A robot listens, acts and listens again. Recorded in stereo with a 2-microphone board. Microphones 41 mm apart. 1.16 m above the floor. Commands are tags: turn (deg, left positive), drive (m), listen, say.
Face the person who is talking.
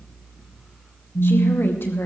<turn deg="70"/>
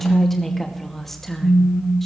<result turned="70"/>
<turn deg="10"/>
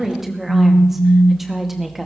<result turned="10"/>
<say>Found it: a woman speaking, straight ahead.</say>